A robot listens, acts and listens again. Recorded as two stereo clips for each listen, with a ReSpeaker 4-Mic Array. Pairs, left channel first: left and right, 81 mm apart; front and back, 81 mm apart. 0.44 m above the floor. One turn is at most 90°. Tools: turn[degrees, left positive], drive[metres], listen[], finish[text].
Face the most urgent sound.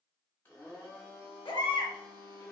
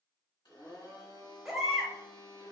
Thought: The baby crying: 90° left.
Action: turn[90]
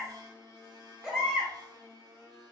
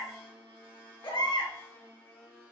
Action: finish[Found it: a baby crying, straight ahead.]